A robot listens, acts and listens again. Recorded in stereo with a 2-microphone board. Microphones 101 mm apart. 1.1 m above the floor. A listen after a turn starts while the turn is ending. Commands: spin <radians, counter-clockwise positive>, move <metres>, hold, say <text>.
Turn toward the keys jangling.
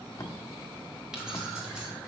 spin -0.52
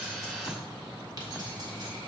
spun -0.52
hold
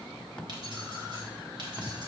spin -2.18
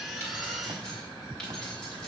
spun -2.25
hold
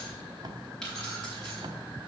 spin 0.17
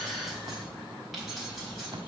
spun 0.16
say Found it: keys jangling, straight ahead.